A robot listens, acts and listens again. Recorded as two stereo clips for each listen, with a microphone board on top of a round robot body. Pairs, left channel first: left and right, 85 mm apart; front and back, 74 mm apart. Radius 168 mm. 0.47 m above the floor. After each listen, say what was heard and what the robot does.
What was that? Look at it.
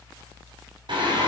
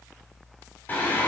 The singing: 65° right. Turn 65° right.
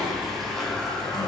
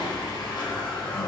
Found it: singing, straight ahead.